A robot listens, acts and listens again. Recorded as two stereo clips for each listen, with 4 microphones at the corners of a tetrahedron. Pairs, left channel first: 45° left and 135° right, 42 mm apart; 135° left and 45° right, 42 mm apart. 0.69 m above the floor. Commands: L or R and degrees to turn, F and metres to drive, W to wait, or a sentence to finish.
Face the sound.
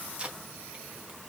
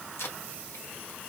L160
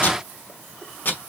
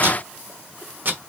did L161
Found it: tape being pulled, straight ahead.